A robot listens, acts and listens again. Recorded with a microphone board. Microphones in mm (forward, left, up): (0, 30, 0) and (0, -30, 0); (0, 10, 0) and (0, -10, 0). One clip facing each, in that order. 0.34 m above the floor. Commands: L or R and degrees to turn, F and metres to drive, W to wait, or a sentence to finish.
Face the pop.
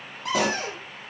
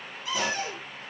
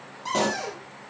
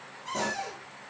L65
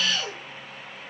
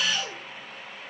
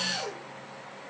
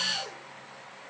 W
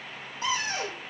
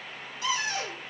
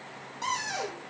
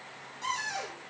I heard a pop, but can't make it out now. It was about straight ahead or 50° left.